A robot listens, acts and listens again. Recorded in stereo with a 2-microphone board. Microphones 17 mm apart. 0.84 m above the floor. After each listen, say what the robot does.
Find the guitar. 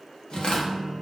Turn 65° left.
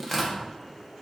Keep listening.
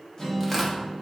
Turn 45° left.
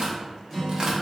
Found it: a guitar, straight ahead, 1 to 2 m away.